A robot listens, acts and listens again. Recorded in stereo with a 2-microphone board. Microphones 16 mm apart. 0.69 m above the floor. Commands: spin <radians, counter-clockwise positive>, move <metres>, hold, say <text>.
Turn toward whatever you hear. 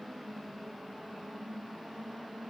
hold
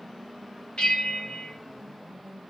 spin 1.13
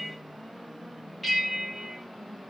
say Facing the bell.